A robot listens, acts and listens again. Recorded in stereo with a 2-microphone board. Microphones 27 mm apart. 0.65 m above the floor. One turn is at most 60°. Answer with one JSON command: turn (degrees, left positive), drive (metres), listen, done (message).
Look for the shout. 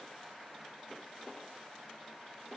{"listen": true}
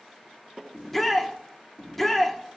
{"turn": 30}
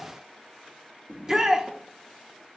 {"turn": -20}
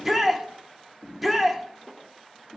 {"done": "Facing the shout."}